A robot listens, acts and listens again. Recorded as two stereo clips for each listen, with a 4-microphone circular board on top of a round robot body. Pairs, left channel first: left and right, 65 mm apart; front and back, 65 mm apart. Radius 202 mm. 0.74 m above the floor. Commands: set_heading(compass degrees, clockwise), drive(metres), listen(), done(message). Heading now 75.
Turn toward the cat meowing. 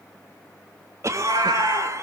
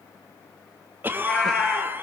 set_heading(160)
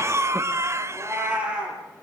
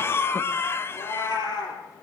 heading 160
set_heading(175)
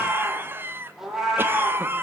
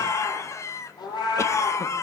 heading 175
done("Facing the cat meowing.")